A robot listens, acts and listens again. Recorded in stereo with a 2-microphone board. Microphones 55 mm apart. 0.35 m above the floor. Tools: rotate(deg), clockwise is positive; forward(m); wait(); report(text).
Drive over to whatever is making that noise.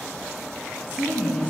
rotate(-35)
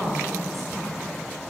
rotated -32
forward(1.0)
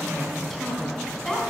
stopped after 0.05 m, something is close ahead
report("Something is in my way. I am facing the woman speaking but have not reached it.")